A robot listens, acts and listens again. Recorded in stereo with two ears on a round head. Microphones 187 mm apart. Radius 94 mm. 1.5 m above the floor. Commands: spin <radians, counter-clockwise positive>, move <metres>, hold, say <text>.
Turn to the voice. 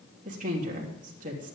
spin -0.70
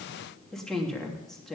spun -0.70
say Facing the woman speaking, 2 to 4 m away.